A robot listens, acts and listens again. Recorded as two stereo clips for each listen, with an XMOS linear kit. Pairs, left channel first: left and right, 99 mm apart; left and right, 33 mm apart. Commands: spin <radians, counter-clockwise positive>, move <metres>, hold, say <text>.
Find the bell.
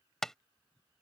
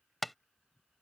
hold
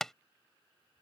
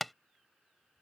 hold
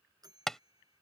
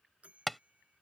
spin -0.70
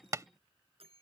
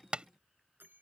spin -1.75
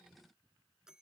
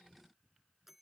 say Facing the bell.